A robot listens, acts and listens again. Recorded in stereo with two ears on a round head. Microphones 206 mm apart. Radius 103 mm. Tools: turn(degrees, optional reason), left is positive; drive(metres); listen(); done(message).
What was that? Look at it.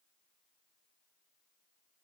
listen()
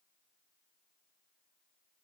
listen()
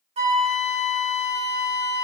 turn(degrees=-25, reason="The flute: about 25° right or 155° right.")
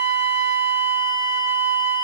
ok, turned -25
turn(degrees=-125, reason="So it is at 125° right.")
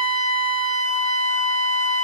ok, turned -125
done("Found it: a flute, straight ahead.")